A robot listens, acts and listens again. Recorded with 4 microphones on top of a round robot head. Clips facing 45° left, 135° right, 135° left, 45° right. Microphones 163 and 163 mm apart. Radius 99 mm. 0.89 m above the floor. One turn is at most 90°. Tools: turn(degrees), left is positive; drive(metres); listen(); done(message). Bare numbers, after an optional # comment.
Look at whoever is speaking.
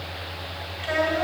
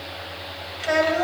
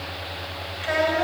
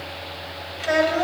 # The child speaking: 90° right.
turn(-90)
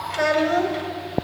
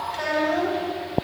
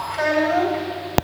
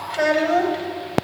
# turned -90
# The child speaking is now 15° left.
turn(15)
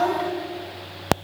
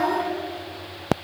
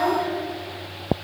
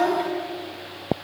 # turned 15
done("Found it: a child speaking, straight ahead, 2 to 4 m away.")